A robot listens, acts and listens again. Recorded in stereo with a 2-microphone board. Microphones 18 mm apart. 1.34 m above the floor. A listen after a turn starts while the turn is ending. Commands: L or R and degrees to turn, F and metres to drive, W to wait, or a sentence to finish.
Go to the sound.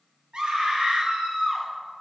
R90
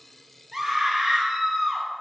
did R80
R20
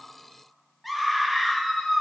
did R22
F1.0
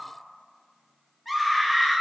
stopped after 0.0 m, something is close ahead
Blocked. The scream is further on, straight ahead.